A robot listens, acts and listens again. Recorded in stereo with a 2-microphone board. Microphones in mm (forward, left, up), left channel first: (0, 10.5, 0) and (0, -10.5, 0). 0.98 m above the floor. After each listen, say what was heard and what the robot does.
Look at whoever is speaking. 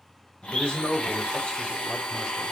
The man speaking: about 70° left or 110° left. Turn 70° left.
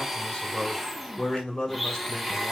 So it is at 35° left. Turn 35° left.
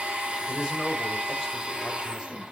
The man speaking is now 25° right. Turn 25° right.
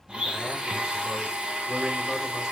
Keep listening.
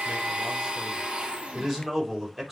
The man speaking is now 15° right. Turn 15° right.
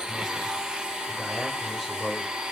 Found it: a man speaking, straight ahead.